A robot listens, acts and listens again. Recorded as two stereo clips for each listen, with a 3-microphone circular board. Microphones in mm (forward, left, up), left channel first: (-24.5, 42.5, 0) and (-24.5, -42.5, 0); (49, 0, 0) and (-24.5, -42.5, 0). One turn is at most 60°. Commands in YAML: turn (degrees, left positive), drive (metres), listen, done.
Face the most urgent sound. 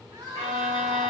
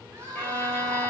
turn: -60
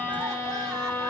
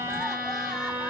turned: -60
turn: -55
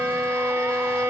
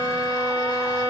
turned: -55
listen: true
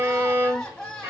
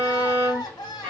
done: "Facing the crying."